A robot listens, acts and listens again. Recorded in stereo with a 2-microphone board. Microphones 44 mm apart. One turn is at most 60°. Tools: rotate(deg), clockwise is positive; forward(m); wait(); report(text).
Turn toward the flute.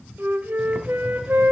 rotate(55)
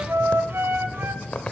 rotate(60)
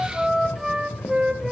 rotate(10)
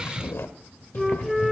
report("Facing the flute, under 1 m away.")